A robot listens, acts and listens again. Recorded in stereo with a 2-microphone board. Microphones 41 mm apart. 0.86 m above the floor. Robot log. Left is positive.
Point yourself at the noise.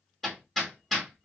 cmd yaw +30
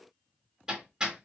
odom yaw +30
note: So it is at 20° right.
cmd yaw -20
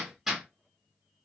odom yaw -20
note: The hammering is now 10° right.
cmd yaw -10
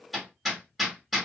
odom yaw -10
end: Facing the hammering.